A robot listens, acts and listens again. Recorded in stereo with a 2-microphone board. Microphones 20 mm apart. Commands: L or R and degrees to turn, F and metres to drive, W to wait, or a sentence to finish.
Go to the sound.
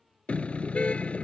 L90
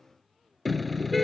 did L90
F1.0
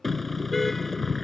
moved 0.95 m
L10
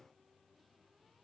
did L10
W
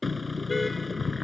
F1.0
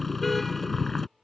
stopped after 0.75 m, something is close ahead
L10
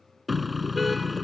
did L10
Something is in my way. I am facing the car horn but have not reached it.